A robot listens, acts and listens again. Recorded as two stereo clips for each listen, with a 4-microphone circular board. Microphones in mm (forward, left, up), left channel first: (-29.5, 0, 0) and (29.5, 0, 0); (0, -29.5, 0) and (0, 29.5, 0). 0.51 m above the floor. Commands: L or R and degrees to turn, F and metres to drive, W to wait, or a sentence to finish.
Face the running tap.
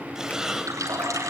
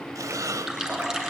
L10
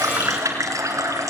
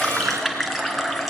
Facing the running tap.